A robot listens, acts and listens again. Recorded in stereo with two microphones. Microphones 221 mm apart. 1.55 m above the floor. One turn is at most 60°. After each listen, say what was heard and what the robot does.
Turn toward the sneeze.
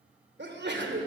The sneeze: about 55° right or 125° right. Turn 55° right.
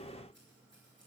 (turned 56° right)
Keep listening.
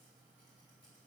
I heard a sneeze, but can't make it out now. It was about 5° left or 70° right.